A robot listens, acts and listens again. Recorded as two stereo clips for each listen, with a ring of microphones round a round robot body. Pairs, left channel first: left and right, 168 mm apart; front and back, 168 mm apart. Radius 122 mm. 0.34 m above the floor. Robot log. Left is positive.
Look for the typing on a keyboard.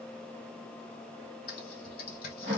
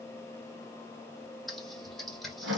note: The typing on a keyboard: 90° left.
cmd yaw +90
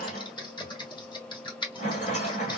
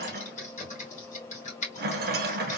note: The typing on a keyboard is now 35° left.
cmd yaw +35
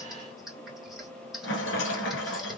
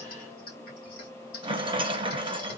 end: Facing the typing on a keyboard.